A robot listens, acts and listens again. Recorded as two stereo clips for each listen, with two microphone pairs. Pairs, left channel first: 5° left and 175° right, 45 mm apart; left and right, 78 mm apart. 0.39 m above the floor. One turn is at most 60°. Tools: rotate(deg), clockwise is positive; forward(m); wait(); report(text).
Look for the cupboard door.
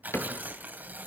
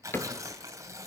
rotate(-25)
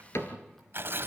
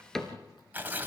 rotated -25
report("Found it: a cupboard door, straight ahead.")